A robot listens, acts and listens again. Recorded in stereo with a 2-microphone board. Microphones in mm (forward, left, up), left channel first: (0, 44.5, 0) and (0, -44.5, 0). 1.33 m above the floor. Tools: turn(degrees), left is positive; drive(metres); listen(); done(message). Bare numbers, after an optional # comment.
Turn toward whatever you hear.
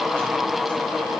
listen()
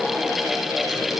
listen()
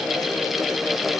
done("I can't make out anything.")